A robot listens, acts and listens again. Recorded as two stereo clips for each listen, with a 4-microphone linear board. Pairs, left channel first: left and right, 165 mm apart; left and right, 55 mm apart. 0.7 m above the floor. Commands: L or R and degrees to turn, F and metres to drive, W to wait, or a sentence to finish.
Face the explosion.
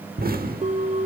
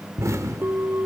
R60
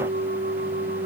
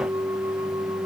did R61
W
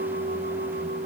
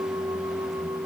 I heard an explosion, but can't make it out now. It was about 5° left or 60° right.